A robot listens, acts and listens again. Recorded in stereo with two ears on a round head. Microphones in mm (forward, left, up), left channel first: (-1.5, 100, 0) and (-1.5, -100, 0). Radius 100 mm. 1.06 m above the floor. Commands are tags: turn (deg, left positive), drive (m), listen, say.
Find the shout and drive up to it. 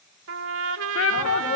<turn deg="65"/>
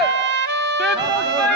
<drive m="1.0"/>
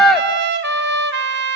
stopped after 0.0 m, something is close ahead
<say>Something is in my way. I am facing the shout but have not reached it.</say>